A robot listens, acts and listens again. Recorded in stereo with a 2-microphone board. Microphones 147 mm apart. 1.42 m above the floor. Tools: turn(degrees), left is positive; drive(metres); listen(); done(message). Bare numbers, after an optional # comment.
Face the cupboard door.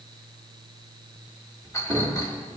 # The cupboard door: about 30° right or 150° right.
turn(-30)
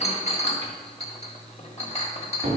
# So it is at 120° right.
turn(-120)
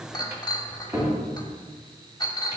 # The cupboard door is now 20° right.
turn(-20)
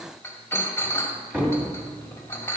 # The cupboard door is now 10° right.
turn(-10)
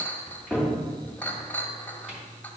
done("Facing the cupboard door.")